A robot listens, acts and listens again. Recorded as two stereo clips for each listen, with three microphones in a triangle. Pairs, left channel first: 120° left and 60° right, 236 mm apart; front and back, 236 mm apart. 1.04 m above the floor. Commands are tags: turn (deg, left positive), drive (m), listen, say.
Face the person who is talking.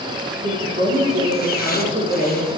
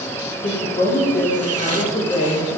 <turn deg="-50"/>
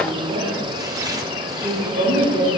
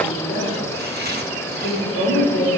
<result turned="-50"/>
<say>Found it: a woman speaking, straight ahead.</say>